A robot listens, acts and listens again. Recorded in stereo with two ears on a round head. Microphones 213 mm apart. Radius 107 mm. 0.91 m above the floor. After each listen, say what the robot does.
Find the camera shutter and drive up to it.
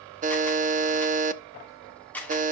Turn 30° left.
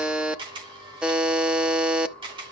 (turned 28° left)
Turn 20° right.
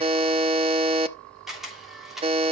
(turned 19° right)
Drive 1.0 m forward.
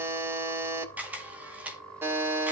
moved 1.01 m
Drive 1.0 m forward.
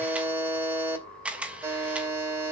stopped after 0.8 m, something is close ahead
Arrived at the camera shutter, straight ahead.